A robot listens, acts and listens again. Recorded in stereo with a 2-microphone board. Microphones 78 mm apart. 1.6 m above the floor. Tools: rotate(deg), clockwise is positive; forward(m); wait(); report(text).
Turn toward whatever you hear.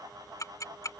rotate(-45)
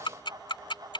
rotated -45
rotate(-90)
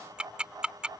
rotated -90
rotate(10)
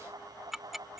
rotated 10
report("Facing the ticking.")